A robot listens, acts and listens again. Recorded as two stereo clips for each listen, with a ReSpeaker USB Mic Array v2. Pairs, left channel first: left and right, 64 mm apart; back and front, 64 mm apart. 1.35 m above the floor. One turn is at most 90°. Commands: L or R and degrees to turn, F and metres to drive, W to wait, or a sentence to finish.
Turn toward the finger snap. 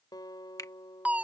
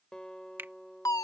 L60
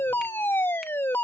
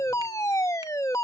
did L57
W
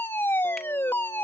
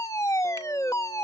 W
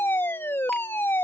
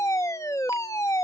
Facing where the finger snap came from. I can't hear it now.